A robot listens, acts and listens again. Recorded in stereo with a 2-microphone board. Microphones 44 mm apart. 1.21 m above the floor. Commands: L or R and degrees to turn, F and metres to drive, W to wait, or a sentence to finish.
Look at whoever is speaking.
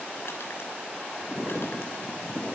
W
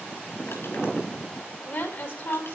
L65
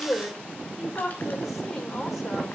Found it: a woman speaking, straight ahead.